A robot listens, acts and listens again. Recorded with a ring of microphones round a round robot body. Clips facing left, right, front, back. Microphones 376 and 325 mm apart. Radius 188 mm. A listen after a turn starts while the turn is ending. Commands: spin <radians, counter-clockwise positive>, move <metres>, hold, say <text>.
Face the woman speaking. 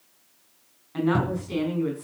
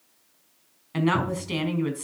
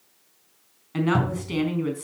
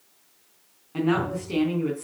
spin -1.13
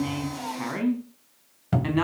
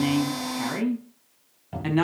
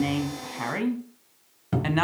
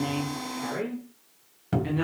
spin -0.17
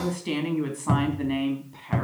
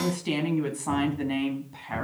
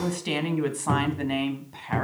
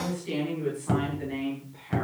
spin -0.26
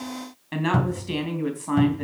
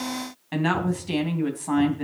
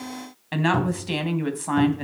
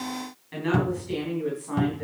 spin -0.17
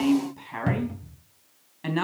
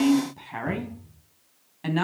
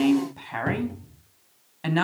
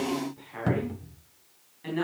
say Facing the woman speaking, 2 to 4 m away.